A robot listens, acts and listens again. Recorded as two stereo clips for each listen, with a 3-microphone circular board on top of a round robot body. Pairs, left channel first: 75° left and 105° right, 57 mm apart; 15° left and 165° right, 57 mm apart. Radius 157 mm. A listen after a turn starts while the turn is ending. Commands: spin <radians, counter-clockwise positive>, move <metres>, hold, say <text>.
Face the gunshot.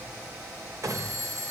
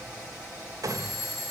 spin -2.44
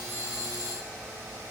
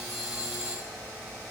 say I heard a gunshot from this way, but can't make it out now.